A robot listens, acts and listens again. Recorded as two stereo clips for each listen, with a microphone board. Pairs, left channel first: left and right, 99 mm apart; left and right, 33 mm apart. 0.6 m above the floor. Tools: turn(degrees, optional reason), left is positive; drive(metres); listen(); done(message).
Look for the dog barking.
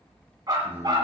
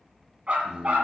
turn(degrees=-45, reason="The dog barking: about 45° right or 135° right.")
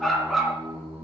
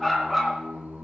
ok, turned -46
done("Found it: a dog barking, straight ahead, 2 to 4 m away.")